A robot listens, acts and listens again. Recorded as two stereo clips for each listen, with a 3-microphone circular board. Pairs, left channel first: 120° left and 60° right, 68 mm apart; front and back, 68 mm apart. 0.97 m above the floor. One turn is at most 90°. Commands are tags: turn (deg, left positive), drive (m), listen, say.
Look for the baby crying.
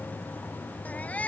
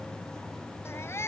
<turn deg="50"/>
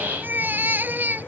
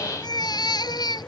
<say>Facing the baby crying.</say>